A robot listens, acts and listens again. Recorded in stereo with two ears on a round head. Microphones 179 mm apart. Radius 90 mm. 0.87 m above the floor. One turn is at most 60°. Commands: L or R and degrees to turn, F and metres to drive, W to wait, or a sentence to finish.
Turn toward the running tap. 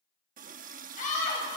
R40
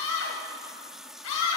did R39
Facing the running tap, under 1 m away.